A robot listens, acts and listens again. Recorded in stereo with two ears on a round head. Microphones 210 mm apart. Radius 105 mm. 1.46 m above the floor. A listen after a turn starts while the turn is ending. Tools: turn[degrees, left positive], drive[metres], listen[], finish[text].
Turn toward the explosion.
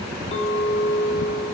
Action: listen[]
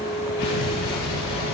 Action: turn[90]
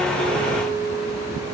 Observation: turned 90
Action: finish[I heard an explosion from this way, but can't make it out now.]